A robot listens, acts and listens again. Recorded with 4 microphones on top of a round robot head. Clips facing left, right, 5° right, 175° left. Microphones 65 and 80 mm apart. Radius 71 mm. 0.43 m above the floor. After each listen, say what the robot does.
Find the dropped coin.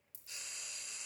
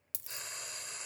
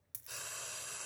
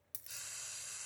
Turn 95° right.
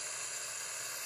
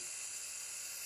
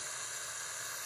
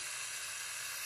Facing where the dropped coin came from. I can't hear it now.